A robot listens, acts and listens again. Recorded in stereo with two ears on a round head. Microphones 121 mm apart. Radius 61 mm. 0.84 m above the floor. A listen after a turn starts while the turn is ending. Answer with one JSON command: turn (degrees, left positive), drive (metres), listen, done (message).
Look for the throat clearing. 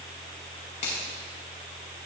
{"listen": true}
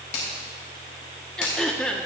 {"turn": 30}
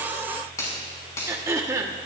{"turn": -25}
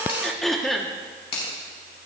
{"done": "Found it: throat clearing, straight ahead."}